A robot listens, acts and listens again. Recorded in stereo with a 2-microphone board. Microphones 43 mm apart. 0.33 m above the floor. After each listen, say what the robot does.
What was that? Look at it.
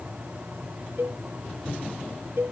Turn 70° right.
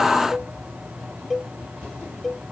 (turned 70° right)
Found it: a cowbell, straight ahead.